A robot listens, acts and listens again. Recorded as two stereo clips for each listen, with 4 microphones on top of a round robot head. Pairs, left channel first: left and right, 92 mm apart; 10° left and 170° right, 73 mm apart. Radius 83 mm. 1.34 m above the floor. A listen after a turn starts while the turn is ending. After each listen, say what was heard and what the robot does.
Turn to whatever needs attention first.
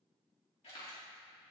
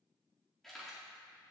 Keep listening.
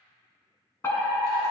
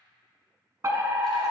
The fire alarm: 150° left. Turn 150° left.
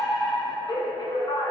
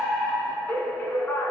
The fire alarm is now 65° left. Turn 65° left.
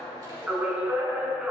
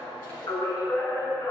The fire alarm is now 15° right. Turn 15° right.
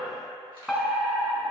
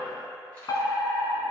Found it: a fire alarm, straight ahead, 1 to 2 m away.